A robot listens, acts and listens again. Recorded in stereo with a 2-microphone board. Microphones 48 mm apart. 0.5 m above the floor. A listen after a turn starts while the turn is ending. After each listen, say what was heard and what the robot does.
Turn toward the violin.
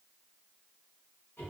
Keep listening.
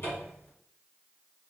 Keep listening.
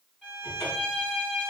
The violin: about 25° left or 155° left. Turn 25° left.
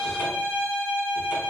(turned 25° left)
So it is at 125° left. Turn 125° left.
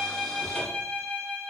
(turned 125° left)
The violin is now 45° left. Turn 45° left.
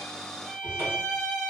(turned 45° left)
The violin is now 15° right. Turn 15° right.
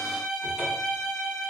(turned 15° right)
Facing the violin, 1 to 2 m away.